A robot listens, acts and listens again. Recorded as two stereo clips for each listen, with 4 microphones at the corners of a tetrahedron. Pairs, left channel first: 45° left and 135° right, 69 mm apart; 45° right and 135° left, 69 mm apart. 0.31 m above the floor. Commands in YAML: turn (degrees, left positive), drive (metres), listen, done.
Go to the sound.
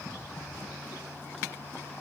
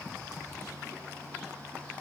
listen: true
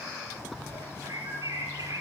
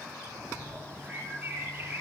turn: -160
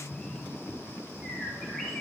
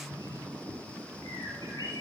turn: -30
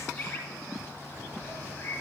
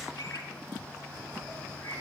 turn: -10
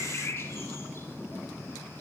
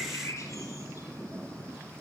drive: 1.0
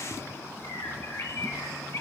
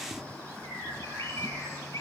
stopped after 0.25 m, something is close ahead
done: "Blocked. The bird is further on, straight ahead."